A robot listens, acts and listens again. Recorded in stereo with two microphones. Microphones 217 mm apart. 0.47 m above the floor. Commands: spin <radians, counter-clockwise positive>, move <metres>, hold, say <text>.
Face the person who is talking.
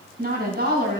spin -0.87
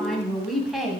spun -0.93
say Facing the woman speaking, 2 to 4 m away.